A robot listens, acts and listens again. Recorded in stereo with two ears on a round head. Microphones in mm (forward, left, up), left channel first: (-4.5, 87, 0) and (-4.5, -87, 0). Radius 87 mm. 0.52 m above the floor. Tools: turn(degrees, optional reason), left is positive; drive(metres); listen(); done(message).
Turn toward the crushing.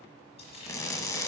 turn(degrees=15, reason="The crushing: about 15° left or 165° left.")
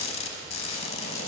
turn(degrees=150, reason="So it is at 150° left.")
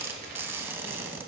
turn(degrees=-10, reason="The crushing is now 10° right.")
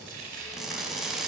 done("Facing the crushing.")